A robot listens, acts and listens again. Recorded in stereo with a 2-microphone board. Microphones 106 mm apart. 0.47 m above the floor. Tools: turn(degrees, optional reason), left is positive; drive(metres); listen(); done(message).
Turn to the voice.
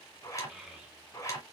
turn(degrees=-30)
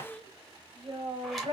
turn(degrees=-125, reason="So it is at 125° right.")
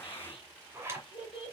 turn(degrees=55, reason="The child speaking is now 55° left.")
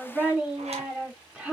turn(degrees=-10, reason="The child speaking is now 10° right.")
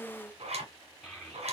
done("Facing the child speaking.")